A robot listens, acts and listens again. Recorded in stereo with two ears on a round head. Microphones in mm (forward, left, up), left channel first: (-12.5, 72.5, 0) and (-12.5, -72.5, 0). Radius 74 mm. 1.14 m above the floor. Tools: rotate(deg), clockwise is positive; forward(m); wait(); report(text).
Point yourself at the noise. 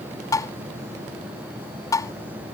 rotate(-20)
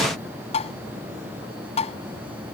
rotate(-140)
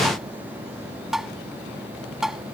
report("Found it: tapping, straight ahead.")